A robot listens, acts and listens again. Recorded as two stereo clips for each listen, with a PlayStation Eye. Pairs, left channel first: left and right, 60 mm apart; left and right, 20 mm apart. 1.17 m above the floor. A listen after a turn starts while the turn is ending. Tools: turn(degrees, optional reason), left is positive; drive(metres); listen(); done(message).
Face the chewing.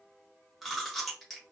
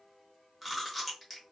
turn(degrees=30)
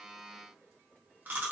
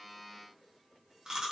turn(degrees=-30, reason="So it is at 30° right.")
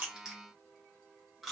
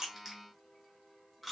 done("Found it: chewing, straight ahead, 1 to 2 m away.")